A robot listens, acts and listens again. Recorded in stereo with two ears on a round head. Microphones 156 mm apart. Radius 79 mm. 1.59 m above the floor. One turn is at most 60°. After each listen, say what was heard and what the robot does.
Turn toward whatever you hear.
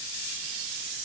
Keep listening.
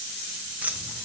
Turn 30° right.
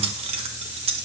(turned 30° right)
So it is at 140° right. Turn 60° right.
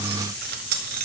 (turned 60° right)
The keys jangling is now 90° right. Turn 60° right.
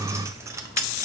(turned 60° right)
The keys jangling is now 20° right. Turn 20° right.
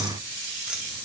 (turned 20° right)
Keep listening.
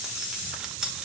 Facing the keys jangling, 1 to 2 m away.